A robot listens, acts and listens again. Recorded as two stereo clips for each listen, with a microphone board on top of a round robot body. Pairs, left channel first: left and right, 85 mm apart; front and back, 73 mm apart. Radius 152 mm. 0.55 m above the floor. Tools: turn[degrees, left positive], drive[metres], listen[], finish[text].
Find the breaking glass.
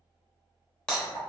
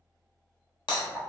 Thought: The breaking glass: 10° left.
Action: turn[10]
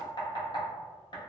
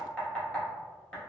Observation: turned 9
Action: finish[I heard breaking glass from this way, but can't make it out now.]